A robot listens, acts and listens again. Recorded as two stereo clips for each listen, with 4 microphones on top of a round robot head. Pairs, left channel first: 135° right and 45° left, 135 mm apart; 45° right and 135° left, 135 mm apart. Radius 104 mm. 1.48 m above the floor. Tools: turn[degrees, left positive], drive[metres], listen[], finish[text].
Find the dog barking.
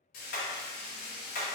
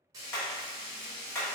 Action: listen[]
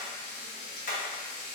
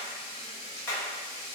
Action: listen[]
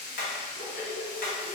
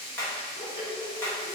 Thought: The dog barking: 110° right.
Action: turn[-110]
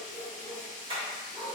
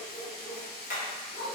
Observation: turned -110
Thought: The dog barking is now 35° right.
Action: turn[-35]
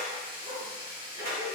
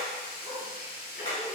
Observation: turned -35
Action: listen[]
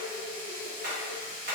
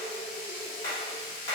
Action: listen[]
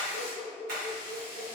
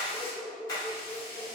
Action: finish[Facing the dog barking.]